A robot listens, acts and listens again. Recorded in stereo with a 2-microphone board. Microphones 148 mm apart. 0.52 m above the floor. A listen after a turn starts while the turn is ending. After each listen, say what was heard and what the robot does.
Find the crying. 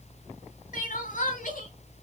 The crying: about 65° left or 115° left. Turn 65° left.
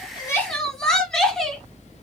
Found it: crying, straight ahead, 1 to 2 m away.